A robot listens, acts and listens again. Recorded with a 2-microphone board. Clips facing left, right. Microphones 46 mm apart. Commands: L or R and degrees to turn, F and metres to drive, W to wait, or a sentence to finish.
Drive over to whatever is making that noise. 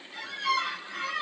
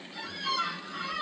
L75
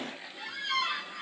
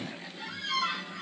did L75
L10
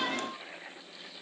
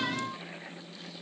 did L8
W
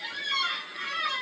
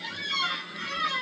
F1.0
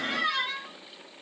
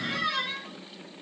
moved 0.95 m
F1.0
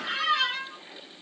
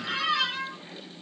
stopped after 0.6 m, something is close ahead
Arrived at the squeak, straight ahead.